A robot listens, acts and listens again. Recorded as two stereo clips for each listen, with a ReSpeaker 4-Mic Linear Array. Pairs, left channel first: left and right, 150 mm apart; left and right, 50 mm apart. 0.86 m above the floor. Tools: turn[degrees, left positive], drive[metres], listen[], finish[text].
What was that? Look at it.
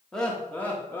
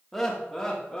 Thought: The laughter: about 15° left or 165° left.
Action: turn[15]
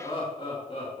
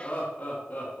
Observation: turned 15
Thought: So it is at 135° left.
Action: turn[135]
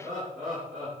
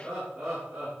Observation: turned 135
Action: finish[Found it: laughter, straight ahead.]